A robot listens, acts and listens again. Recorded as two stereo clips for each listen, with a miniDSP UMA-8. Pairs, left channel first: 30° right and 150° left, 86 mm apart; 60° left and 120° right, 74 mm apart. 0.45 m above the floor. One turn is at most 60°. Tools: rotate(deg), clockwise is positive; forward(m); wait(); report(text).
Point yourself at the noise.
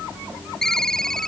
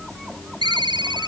rotate(60)
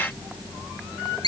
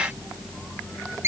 rotate(60)
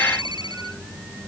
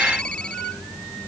wait()
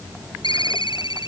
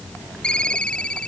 rotate(15)
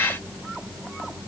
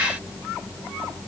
wait()
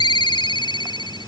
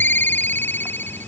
report("Facing the ringtone.")